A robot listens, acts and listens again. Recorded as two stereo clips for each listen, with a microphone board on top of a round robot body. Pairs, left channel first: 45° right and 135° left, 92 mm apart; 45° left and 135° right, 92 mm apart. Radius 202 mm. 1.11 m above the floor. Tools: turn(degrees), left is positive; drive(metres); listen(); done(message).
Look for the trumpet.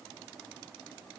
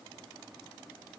listen()
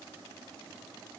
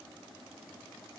listen()
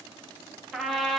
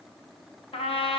turn(degrees=45)
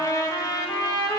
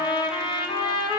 turn(degrees=10)
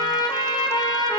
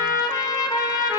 done("Found it: a trumpet, straight ahead.")